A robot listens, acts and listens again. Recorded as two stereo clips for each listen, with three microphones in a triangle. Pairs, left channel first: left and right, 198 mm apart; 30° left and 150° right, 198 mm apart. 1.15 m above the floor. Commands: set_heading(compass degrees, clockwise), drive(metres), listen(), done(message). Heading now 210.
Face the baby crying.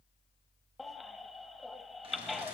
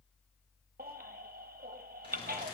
set_heading(30)
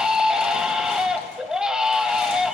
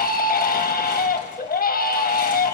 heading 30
done("Facing the baby crying.")